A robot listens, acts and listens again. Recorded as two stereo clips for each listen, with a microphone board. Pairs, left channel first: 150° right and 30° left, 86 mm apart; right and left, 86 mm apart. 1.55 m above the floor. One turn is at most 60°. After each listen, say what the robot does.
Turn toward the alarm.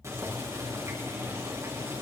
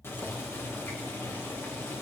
Keep listening.
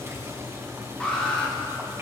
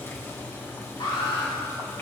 Turn 60° right.
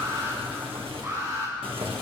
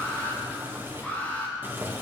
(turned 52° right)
Turn 20° right.
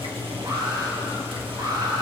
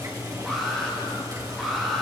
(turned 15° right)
Facing the alarm.